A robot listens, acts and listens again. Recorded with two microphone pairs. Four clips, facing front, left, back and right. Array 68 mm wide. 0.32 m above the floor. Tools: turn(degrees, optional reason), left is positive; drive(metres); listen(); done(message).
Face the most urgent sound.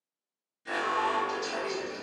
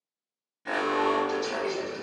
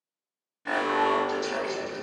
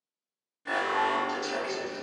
turn(degrees=160, reason="The alarm: 160° left.")
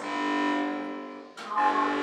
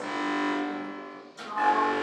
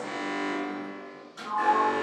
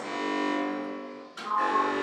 turn(degrees=30, reason="The alarm is now 30° left.")
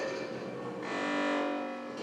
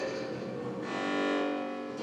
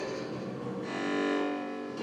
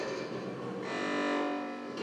done("Facing the alarm.")